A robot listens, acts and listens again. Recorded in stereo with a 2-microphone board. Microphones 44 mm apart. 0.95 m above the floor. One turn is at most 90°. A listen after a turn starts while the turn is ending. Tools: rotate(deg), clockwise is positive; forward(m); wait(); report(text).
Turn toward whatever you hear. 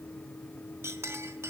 rotate(90)
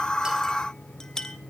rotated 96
rotate(-15)
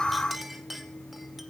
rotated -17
report("Facing the clink.")